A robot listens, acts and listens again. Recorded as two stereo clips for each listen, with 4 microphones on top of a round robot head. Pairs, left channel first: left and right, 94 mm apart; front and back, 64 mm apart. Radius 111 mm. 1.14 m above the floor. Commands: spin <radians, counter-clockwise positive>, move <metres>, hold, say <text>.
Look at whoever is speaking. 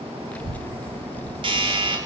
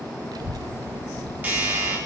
spin 2.88
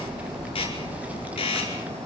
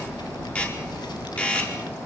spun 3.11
spin -0.26
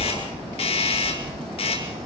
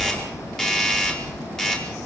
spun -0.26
say Found it: a child speaking, straight ahead, under 1 m away.